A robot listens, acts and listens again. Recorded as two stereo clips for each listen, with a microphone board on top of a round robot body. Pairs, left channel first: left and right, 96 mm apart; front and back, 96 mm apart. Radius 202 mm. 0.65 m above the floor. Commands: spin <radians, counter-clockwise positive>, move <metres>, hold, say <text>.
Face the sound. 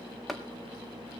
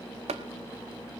spin 3.14
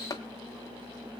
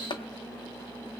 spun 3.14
spin 0.61
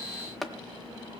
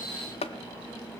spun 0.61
say Facing the tapping, under 1 m away.